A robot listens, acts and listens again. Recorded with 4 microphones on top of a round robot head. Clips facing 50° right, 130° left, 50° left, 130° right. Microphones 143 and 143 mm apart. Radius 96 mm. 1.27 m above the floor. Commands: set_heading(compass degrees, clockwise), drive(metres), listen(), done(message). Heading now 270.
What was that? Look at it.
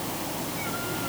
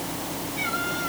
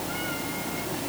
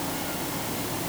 listen()
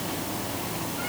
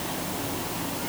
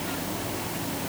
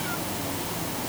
listen()
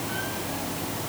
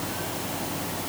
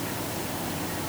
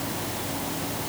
done("I can't make out anything to turn to.")